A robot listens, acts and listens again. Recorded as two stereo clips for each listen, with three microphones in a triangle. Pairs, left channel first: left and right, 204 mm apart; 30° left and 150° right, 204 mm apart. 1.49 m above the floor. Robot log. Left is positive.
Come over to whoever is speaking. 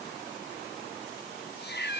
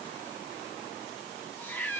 cmd idle
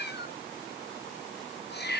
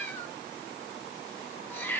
cmd idle
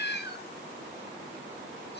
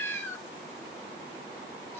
end: I can't make out anyone speaking to turn to.